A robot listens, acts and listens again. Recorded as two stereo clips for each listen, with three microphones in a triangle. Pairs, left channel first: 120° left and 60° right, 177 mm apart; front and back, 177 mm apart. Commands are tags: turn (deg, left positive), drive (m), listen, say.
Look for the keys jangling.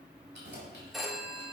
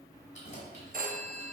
<turn deg="-50"/>
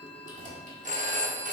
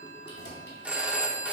<turn deg="-10"/>
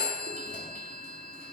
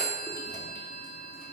<listen/>
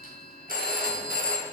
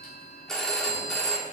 <listen/>
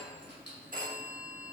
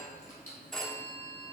<turn deg="-50"/>
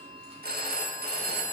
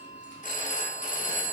<listen/>
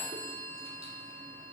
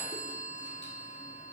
<listen/>
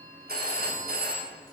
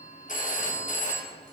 <say>Facing where the keys jangling came from. I can't hear it now.</say>